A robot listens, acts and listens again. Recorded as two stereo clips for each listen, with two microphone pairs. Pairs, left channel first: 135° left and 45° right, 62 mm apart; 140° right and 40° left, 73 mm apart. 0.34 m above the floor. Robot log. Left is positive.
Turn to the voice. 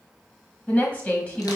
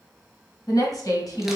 note: The woman speaking: 160° right.
cmd yaw -160
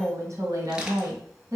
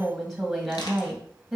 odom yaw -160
note: The woman speaking is now 50° right.
cmd yaw -50
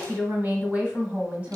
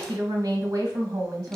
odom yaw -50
note: The woman speaking is now 15° left.
cmd yaw +15
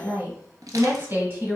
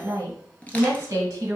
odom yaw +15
end: Found it: a woman speaking, straight ahead, 1 to 2 m away.